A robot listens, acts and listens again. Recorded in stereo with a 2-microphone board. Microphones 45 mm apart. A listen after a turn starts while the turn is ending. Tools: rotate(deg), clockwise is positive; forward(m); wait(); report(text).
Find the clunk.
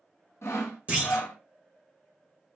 rotate(30)
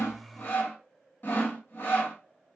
wait()
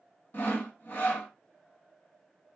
report("I heard a clunk, but can't make it out now. It was about straight ahead or 120° right.")